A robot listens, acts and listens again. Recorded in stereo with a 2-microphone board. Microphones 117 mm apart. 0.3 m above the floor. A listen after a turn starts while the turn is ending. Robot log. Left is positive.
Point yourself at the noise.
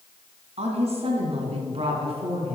note: The woman speaking: about 50° right or 130° right.
cmd yaw -50
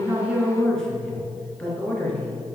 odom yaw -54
note: So it is at 10° left.
cmd yaw +10
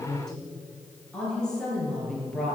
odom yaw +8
note: The woman speaking is now 10° left.
cmd yaw +10
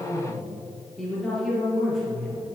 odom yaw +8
end: Facing the woman speaking.